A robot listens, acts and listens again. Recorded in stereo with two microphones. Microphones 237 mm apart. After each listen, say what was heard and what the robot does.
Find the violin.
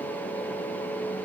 Keep listening.
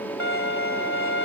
The violin: about 60° left or 120° left. Turn 60° left.
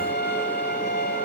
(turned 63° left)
So it is at 50° left. Turn 50° left.
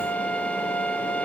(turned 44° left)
Facing the violin, 2 to 4 m away.